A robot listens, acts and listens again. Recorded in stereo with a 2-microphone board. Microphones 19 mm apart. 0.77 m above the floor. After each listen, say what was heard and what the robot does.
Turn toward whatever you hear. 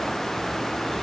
Keep listening.
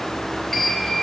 Turn 30° left.
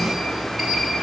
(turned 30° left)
So it is at 20° right. Turn 20° right.
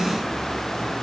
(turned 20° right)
Keep listening.
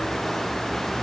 Keep listening.
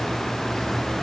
I heard a sliding door from this way, but can't make it out now.